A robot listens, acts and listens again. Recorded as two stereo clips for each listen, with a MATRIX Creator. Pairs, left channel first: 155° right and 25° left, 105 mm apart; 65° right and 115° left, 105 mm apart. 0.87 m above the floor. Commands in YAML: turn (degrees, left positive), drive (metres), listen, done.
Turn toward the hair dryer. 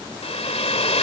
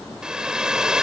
turn: -165
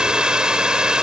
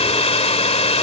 turn: -60
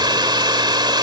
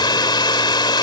turn: -25
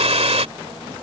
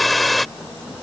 turn: 20
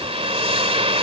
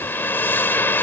done: "Found it: a hair dryer, straight ahead."